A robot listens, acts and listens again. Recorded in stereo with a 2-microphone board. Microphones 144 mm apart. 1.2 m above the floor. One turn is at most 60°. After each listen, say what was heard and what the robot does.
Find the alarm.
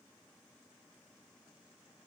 Keep listening.
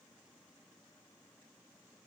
Keep listening.
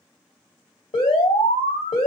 The alarm: about 40° left or 140° left. Turn 40° left.
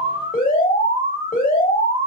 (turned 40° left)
So it is at 100° left. Turn 60° left.
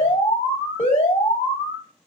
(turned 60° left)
The alarm is now 50° left. Turn 50° left.
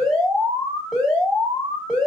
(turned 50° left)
Found it: an alarm, straight ahead.